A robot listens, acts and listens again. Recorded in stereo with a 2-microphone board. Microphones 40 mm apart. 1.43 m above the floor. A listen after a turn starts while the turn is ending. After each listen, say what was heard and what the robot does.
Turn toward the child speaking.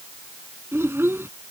Turn 90° right.
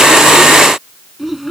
Found it: a child speaking, straight ahead.